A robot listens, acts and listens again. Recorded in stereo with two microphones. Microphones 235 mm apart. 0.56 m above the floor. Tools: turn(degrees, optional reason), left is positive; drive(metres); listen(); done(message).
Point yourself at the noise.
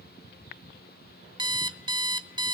turn(degrees=-20, reason="The alarm clock: about 20° right or 160° right.")
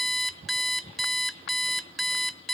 done("Found it: an alarm clock, straight ahead, under 1 m away.")